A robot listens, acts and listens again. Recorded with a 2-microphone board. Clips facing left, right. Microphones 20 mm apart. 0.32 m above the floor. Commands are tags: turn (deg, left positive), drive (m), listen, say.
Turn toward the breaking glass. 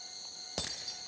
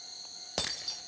<turn deg="-30"/>
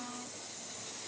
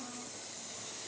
<listen/>
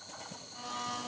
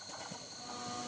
<say>I heard breaking glass, but can't make it out now. It was about 15° left or 135° right.</say>